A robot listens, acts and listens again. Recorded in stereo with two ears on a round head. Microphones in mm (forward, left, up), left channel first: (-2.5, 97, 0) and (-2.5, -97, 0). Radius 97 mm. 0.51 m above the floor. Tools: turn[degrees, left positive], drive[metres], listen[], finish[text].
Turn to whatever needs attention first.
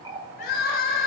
Thought: The crying: about 45° left or 135° left.
Action: turn[45]
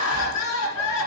Thought: So it is at 90° left.
Action: turn[90]
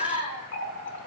Thought: The crying is now 30° left.
Action: turn[30]
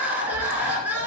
Thought: The crying is now 10° right.
Action: turn[-10]
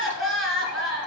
Action: finish[Facing the crying.]